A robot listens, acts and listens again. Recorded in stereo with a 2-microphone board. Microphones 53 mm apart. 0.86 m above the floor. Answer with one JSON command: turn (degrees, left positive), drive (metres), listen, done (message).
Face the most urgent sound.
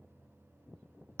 {"listen": true}
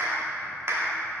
{"listen": true}
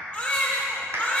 {"turn": 20}
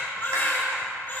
{"turn": 140}
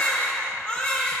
{"turn": 25}
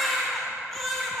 {"done": "Facing the baby crying."}